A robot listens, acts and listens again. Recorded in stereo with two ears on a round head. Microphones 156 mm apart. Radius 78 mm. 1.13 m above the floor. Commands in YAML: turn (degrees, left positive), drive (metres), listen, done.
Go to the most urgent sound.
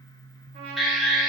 turn: 30
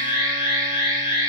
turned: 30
turn: 150
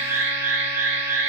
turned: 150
turn: -15
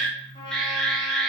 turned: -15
drive: 1.0
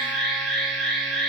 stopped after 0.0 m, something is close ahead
done: "Something is in my way. I am facing the alarm but have not reached it."